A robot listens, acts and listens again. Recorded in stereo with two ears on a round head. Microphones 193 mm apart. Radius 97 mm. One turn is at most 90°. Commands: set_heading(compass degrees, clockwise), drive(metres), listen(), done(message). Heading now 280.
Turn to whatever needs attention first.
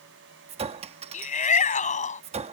set_heading(245)
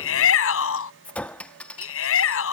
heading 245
set_heading(155)
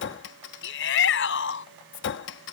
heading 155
set_heading(100)
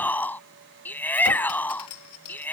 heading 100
set_heading(90)
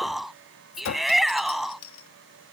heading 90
done("Found it: a shout, straight ahead.")